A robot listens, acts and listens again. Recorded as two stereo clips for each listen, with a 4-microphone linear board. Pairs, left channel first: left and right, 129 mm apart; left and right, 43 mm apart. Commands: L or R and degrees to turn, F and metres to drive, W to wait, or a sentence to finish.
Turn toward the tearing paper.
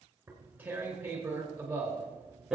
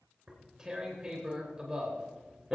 R30
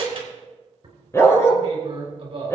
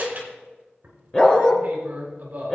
R140
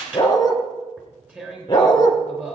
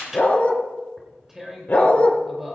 R10
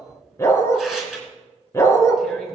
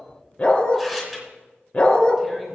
Facing the tearing paper.